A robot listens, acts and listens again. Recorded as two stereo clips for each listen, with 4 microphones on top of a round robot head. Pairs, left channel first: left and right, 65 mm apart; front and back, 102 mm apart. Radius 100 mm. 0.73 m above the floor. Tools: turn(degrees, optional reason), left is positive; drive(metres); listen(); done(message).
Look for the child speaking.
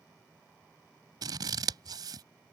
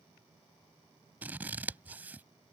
listen()
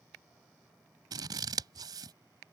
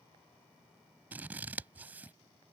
listen()
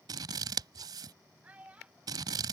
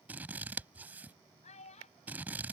turn(degrees=-15, reason="The child speaking: 15° right.")
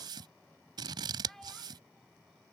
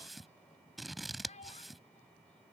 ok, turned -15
done("Found it: a child speaking, straight ahead.")